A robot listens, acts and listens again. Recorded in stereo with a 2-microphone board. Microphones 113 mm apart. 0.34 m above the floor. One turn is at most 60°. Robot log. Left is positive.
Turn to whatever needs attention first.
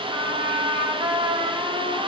cmd idle
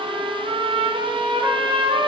cmd idle
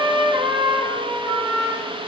end: I can't make out anything urgent to turn to.